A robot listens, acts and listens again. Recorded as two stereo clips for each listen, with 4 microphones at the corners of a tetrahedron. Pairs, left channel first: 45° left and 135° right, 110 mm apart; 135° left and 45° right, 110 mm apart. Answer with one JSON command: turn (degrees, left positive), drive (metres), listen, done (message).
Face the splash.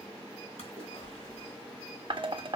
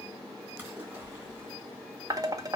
{"turn": 25}
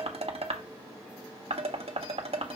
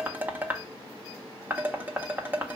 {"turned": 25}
{"done": "I heard a splash from this way, but can't make it out now."}